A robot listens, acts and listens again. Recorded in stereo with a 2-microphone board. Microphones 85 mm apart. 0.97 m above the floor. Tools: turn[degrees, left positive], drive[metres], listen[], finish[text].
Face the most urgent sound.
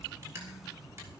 Action: listen[]
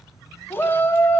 Thought: The shout: about 25° left or 155° left.
Action: turn[25]
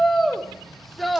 Action: finish[Facing the shout.]